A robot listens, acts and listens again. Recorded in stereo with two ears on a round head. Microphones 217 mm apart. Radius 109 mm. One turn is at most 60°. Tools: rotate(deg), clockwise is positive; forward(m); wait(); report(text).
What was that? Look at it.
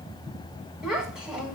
rotate(30)
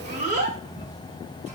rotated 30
rotate(60)
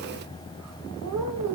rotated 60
rotate(60)
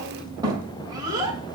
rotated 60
rotate(20)
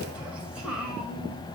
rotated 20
wait()
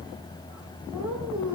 report("Found it: a child speaking, straight ahead, 1 to 2 m away.")